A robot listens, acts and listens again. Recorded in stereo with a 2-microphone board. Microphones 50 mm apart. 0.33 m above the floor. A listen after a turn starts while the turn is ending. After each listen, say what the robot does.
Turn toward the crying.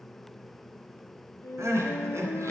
Turn 70° right.
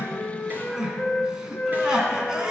Turn 15° right.
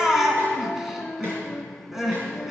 Found it: crying, straight ahead, 2 to 4 m away.